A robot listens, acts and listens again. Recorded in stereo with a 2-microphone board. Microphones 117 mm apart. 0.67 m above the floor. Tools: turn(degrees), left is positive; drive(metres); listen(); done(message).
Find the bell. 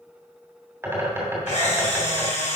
listen()
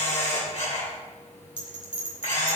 turn(degrees=50)
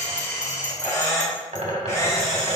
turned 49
turn(degrees=80)
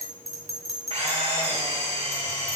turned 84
done("Facing the bell, 2 to 4 m away.")